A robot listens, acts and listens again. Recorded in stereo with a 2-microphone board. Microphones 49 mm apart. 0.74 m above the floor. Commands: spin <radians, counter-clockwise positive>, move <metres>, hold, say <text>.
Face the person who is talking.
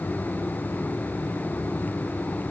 hold
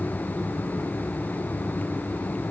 hold
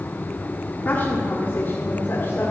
spin 0.87
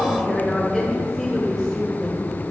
say Found it: a woman speaking, straight ahead.